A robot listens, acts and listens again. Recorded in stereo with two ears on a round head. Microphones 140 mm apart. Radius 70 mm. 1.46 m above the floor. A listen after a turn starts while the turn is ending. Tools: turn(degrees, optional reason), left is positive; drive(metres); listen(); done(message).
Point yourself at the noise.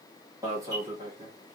turn(degrees=-20, reason="The alarm: about 20° right or 160° right.")
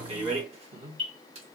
turn(degrees=-140, reason="So it is at 140° right.")
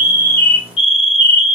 turn(degrees=35, reason="The alarm is now 35° left.")
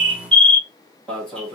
done("Facing the alarm, 1 to 2 m away.")